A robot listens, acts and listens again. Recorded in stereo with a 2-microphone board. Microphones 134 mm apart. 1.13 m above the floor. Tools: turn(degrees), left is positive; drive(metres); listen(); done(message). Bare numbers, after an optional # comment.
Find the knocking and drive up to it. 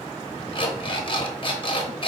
listen()
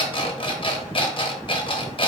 listen()
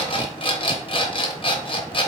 done("I can't make out knocking, only an alarm clock.")